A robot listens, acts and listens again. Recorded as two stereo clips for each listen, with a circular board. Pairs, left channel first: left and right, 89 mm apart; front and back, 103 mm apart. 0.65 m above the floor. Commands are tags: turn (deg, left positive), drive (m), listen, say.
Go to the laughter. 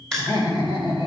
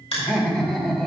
<turn deg="85"/>
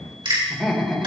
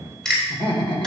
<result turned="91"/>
<drive m="1.0"/>
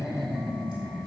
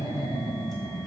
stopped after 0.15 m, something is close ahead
<turn deg="-10"/>
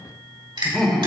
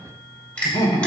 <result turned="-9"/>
<say>Blocked. The laughter is further on, straight ahead.</say>